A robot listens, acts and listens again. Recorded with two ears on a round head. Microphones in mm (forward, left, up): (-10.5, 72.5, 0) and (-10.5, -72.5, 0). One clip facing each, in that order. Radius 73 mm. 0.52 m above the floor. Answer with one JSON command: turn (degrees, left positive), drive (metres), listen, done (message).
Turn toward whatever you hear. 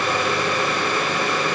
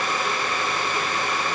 {"listen": true}
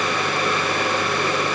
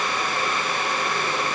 {"listen": true}
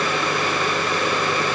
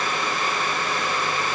{"done": "I can't make out anything."}